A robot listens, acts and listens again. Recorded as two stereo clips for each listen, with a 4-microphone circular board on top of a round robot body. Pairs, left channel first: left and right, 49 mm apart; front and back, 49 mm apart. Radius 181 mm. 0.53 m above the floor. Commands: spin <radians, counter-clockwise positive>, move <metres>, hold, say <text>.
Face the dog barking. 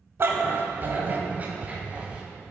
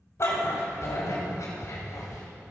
spin -0.35
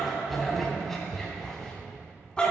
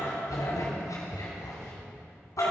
spin 0.35
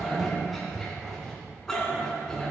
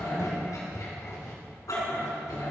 spin 0.17
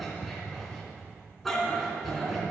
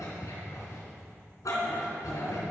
say Found it: a dog barking, straight ahead.